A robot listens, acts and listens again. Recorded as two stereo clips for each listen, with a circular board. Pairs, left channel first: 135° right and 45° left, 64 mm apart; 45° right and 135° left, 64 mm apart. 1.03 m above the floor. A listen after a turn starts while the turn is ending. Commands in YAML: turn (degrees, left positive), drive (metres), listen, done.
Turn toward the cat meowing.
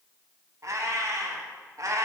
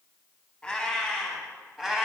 turn: 55
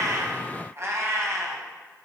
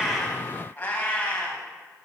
turn: 20
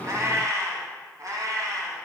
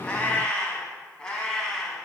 turn: 35
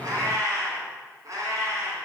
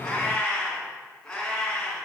turn: 30
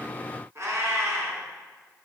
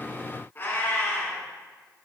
done: "Facing the cat meowing."